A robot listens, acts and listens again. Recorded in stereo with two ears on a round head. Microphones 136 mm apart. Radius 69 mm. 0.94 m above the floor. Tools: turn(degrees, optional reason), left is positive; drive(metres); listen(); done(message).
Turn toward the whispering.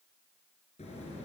listen()
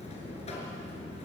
listen()
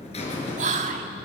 turn(degrees=-45, reason="The whispering: about 45° right or 135° right.")
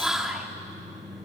done("Facing the whispering, 2 to 4 m away.")